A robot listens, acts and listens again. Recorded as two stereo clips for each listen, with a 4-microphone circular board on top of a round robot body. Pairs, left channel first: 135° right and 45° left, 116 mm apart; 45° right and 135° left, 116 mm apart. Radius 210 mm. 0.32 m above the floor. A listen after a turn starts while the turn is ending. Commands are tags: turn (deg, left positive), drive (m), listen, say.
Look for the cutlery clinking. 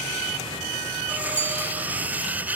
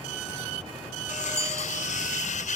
<turn deg="-30"/>
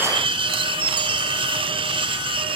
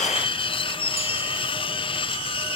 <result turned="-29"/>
<say>Found it: cutlery clinking, straight ahead.</say>